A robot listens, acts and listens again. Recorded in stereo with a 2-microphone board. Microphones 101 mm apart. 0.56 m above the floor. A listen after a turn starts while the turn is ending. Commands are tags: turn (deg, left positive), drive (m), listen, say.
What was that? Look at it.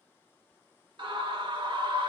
<turn deg="-55"/>
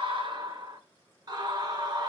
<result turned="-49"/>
<turn deg="-55"/>
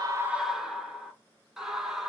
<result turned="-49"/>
<say>Facing the scream.</say>